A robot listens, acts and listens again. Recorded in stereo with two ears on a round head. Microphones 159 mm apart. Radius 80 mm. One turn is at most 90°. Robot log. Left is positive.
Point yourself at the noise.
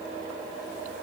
cmd idle
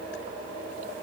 cmd idle
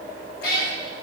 note: The cat meowing: about 60° left or 120° left.
cmd yaw +60
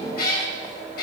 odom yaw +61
note: So it is at 55° left.
cmd yaw +55
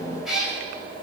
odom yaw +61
end: Facing the cat meowing.